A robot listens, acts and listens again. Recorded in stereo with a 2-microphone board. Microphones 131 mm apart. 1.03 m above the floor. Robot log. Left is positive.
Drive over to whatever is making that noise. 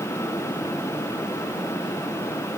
cmd idle
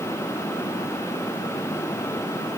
cmd idle
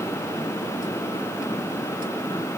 end: I can't make out anything to turn to.